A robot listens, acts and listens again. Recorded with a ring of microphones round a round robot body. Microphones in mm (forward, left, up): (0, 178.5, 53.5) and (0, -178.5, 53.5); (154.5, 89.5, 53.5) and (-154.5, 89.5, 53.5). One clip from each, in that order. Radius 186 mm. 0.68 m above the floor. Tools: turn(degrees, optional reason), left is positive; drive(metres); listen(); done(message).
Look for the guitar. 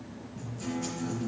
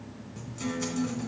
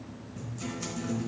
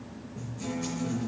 turn(degrees=-75, reason="The guitar: 75° right.")
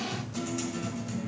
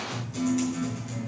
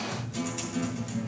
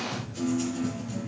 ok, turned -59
turn(degrees=-15, reason="The guitar is now 15° right.")
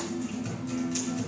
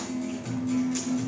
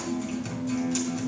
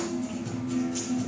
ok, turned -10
done("Facing the guitar.")